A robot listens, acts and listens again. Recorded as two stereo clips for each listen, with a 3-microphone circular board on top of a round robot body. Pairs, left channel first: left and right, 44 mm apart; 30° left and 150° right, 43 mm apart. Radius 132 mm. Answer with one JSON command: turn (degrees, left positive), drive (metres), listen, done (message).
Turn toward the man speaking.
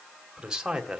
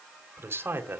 {"turn": -170}
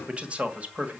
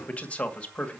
{"turn": -35}
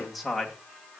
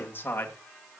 {"done": "Found it: a man speaking, straight ahead, 2 to 4 m away."}